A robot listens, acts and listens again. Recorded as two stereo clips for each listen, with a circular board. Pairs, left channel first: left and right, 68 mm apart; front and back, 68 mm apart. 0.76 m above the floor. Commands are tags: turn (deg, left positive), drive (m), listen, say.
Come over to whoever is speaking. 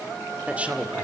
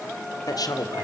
<turn deg="-20"/>
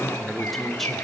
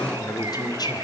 <drive m="1.0"/>
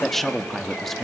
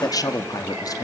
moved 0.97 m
<drive m="1.0"/>
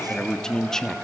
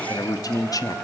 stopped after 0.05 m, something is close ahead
<turn deg="10"/>
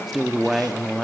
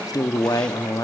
<say>Arrived at the man speaking, straight ahead.</say>